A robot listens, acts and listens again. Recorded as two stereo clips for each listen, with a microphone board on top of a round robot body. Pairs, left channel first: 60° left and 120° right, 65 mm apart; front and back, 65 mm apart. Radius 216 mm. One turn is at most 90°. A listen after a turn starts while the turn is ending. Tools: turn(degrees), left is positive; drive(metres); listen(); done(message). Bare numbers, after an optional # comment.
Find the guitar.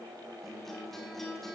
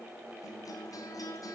# The guitar: 25° right.
turn(-25)
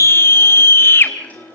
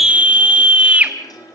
done("Facing the guitar, over 4 m away.")